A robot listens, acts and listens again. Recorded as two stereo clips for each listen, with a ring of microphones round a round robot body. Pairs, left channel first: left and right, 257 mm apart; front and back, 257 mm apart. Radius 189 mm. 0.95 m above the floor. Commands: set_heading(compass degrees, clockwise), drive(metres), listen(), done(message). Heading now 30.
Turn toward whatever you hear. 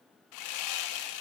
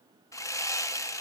set_heading(310)
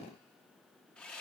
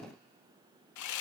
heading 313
done("Facing the sawing.")